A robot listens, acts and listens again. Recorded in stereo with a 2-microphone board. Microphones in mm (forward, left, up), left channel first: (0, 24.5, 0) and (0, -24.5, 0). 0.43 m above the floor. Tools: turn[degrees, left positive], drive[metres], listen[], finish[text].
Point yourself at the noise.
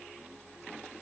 Action: listen[]
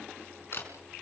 Thought: The camera shutter: about 55° left or 125° left.
Action: turn[55]
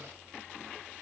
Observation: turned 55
Action: listen[]
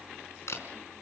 Thought: So it is at 70° left.
Action: turn[70]
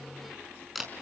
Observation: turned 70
Action: finish[Found it: a camera shutter, straight ahead, over 4 m away.]